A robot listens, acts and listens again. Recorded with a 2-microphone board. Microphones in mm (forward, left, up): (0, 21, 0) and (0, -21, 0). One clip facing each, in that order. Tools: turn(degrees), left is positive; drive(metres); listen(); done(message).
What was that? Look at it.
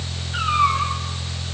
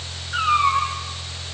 turn(degrees=-50)
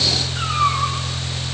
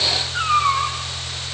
turn(degrees=-80)
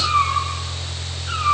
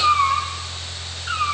turn(degrees=-35)
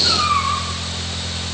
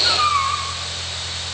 done("Facing the cat meowing.")